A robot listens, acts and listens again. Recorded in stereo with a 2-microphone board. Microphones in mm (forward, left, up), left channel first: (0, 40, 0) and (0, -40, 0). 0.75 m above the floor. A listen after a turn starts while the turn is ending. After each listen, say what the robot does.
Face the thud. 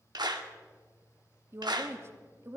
Keep listening.
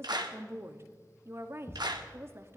Turn 40° left.
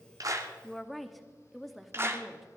Keep listening.
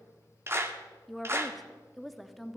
I heard a thud, but can't make it out now. It was about straight ahead or 100° left.